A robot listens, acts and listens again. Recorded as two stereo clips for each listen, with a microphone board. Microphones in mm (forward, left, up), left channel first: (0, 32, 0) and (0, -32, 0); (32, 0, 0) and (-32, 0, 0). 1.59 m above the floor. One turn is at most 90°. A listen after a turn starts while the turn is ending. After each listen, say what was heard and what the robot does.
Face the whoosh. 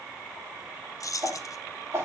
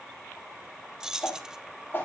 The whoosh: 55° right. Turn 55° right.
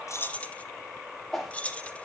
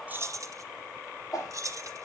Found it: a whoosh, straight ahead.